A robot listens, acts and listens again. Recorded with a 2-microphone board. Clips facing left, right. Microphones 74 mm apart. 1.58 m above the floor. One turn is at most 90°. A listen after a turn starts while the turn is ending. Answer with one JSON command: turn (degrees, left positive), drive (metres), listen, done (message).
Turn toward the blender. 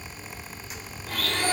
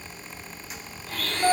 {"turn": 75}
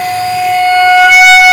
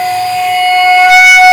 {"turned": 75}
{"listen": true}
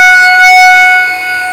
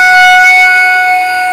{"listen": true}
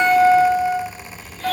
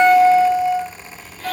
{"done": "I heard a blender, but can't make it out now. It was about straight ahead or 30° left."}